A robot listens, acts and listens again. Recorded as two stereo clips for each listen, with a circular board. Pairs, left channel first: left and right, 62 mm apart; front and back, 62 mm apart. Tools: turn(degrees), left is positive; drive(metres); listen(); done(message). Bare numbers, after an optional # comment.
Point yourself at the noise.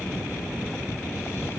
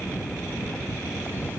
listen()
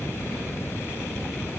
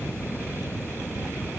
listen()
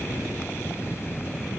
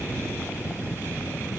done("I can't make out anything to turn to.")